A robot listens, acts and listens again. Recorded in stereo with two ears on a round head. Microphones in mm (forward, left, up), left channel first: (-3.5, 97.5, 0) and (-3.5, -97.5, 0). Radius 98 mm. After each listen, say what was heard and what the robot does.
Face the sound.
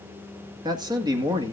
The man speaking: about 20° right or 160° right. Turn 20° right.
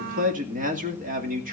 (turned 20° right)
The man speaking: about 40° right or 140° right. Turn 40° right.
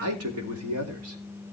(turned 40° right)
So it is at 105° right. Turn 105° right.
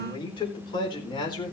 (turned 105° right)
The man speaking is now 20° left. Turn 20° left.
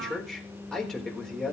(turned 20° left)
Facing the man speaking, over 4 m away.